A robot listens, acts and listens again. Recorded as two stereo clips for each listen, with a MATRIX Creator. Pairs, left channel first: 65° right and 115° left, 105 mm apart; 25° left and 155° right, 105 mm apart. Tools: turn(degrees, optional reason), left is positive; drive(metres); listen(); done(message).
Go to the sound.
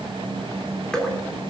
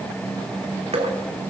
turn(degrees=-150, reason="The dripping: 150° right.")
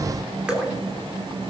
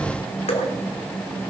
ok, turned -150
turn(degrees=30, reason="The dripping is now 30° left.")
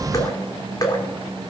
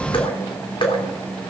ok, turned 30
turn(degrees=-15, reason="The dripping is now 15° right.")
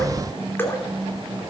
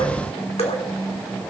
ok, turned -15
drive(metres=1.0)
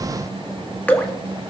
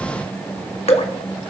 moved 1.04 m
turn(degrees=10, reason="The dripping is now 10° left.")
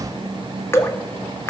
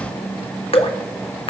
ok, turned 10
drive(metres=1.0)
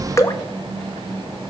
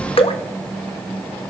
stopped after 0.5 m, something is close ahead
done("Arrived at the dripping, straight ahead.")